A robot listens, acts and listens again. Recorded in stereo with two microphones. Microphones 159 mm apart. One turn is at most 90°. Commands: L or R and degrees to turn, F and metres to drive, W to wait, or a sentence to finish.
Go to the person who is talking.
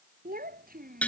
R70
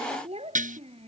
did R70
R40
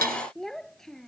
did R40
F1.0
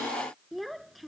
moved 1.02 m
F1.0
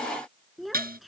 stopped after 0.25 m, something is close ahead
Blocked. The child speaking is further on, straight ahead.